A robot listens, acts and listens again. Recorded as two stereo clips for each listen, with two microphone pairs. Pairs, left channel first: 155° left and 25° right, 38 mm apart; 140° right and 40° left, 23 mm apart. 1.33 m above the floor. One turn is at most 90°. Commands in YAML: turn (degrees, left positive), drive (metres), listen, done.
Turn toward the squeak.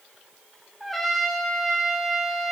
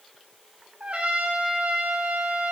listen: true
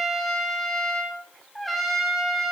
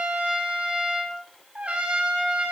listen: true
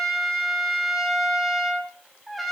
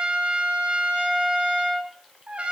done: "I can't make out a squeak, only a trumpet."